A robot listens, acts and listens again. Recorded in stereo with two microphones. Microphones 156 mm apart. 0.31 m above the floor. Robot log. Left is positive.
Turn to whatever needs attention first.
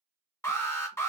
note: The alarm: about 15° left or 165° left.
cmd yaw +15
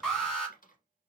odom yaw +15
end: Facing the alarm, 1 to 2 m away.